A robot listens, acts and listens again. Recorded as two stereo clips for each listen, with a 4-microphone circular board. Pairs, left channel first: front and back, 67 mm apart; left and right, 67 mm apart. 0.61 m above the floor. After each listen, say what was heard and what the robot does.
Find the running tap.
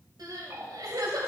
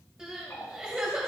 The running tap: 135° left. Turn 135° left.
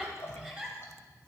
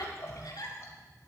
The running tap is now 45° left. Turn 45° left.
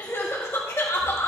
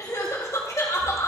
Keep listening.
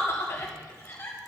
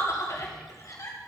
Keep listening.
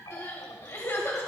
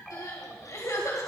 Facing the running tap, 1 to 2 m away.